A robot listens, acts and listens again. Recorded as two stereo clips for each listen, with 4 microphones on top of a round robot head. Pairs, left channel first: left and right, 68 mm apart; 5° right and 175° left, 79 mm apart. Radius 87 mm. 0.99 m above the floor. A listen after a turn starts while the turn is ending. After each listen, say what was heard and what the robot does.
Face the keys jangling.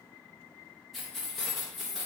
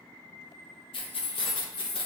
Found it: keys jangling, straight ahead.